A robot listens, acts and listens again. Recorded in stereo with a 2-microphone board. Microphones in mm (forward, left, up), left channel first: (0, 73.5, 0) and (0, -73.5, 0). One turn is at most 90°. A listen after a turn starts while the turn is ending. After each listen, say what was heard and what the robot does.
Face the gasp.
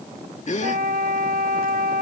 The gasp: about 50° left or 130° left. Turn 50° left.
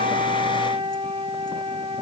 Keep listening.
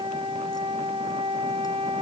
I heard a gasp, but can't make it out now. It was about straight ahead or 80° left.